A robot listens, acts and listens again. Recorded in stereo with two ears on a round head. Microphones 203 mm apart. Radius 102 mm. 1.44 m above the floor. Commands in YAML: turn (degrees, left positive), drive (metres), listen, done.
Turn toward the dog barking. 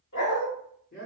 turn: 55
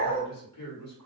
turn: 50
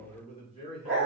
done: "Found it: a dog barking, straight ahead."